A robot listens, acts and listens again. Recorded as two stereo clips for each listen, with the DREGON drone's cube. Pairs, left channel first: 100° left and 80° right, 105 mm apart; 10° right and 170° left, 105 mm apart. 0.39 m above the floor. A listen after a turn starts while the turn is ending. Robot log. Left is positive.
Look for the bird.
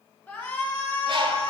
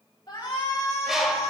note: The bird: 105° right.
cmd yaw -105
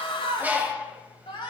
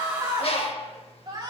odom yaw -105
end: Facing the bird.